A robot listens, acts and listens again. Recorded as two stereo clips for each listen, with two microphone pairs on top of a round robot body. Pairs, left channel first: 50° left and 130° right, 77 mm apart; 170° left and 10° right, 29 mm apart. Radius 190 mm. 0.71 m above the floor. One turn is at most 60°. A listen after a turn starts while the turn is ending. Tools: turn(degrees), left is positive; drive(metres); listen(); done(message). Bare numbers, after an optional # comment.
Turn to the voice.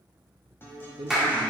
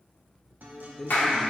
# The man speaking: 115° right.
turn(-60)
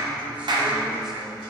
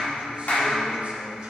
# Nothing new. It was at 55° right.
turn(-55)
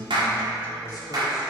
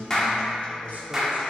listen()
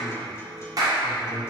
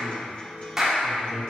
# The man speaking is now 10° left.
turn(10)
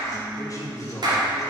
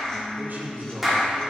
done("Found it: a man speaking, straight ahead.")